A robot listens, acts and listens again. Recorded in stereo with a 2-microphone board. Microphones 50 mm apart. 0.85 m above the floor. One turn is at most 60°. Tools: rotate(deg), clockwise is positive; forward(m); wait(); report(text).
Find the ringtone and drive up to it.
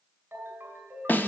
rotate(50)
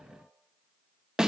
wait()
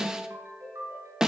rotate(60)
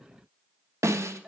rotate(20)
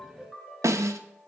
forward(1.0)
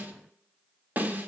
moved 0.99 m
wait()
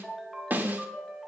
forward(1.0)
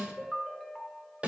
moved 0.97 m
forward(1.0)
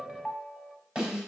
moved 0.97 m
forward(1.0)
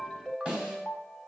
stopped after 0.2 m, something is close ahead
report("Arrived at the ringtone, straight ahead.")